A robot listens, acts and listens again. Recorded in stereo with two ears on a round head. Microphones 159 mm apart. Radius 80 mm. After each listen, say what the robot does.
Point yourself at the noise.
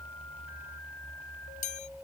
Turn 45° left.
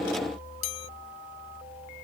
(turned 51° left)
Turn 85° left.
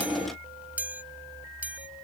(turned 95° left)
Turn 10° right.
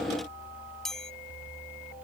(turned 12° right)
Facing the chime.